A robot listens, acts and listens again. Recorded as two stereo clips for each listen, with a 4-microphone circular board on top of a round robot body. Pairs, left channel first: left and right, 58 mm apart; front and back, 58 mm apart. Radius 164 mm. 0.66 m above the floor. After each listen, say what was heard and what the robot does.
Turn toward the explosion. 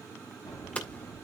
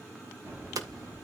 The explosion: 120° left. Turn 120° left.
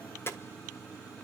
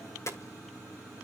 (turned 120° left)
Facing where the explosion came from. I can't hear it now.